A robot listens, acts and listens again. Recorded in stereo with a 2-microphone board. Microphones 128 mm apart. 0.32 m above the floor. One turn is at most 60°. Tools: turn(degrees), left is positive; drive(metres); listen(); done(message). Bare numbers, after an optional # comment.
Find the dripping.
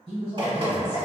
# The dripping: about 40° right or 140° right.
turn(-40)
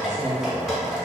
done("Found it: dripping, straight ahead.")